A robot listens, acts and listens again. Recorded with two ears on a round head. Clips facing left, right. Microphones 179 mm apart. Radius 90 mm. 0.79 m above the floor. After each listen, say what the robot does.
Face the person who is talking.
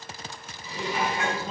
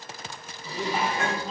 Turn 30° left.
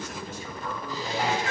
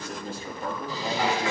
Turn 30° right.
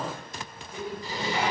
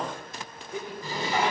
Turn 15° right.
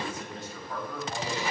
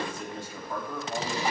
Turn 15° right.
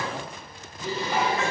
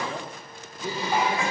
Found it: a man speaking, straight ahead.